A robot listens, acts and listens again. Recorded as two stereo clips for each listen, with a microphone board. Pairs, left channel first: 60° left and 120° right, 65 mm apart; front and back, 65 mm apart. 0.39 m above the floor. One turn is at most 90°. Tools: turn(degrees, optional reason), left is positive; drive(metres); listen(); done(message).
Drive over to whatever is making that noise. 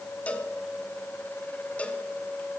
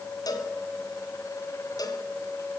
turn(degrees=-10, reason="The cowbell: 10° right.")
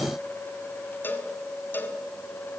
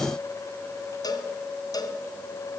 drive(metres=1.0)
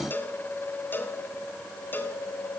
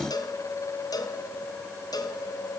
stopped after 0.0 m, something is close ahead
done("Something is in my way. I am facing the cowbell but have not reached it.")